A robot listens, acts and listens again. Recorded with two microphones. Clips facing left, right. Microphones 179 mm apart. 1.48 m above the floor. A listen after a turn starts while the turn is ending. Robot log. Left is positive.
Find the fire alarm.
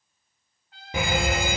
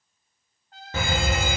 cmd yaw +30
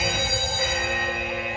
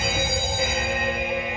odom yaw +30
note: So it is at 20° right.
cmd yaw -20
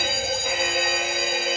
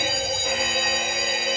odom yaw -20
end: Found it: a fire alarm, straight ahead, 2 to 4 m away.